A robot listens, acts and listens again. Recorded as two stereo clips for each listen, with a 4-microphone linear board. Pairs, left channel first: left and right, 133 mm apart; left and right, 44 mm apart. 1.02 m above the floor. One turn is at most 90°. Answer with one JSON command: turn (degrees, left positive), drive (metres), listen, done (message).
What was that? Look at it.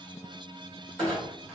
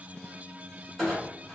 {"turn": 30}
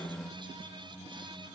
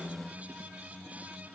{"listen": true}
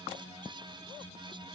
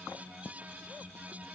{"done": "I heard a clunk, but can't make it out now. It was about 25° right or 145° left."}